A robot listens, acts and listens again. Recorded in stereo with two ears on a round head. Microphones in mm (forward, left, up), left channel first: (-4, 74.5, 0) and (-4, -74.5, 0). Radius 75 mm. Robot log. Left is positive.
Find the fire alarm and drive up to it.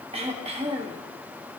cmd idle
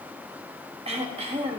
cmd idle
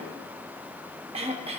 end: I can't make out a fire alarm to turn to.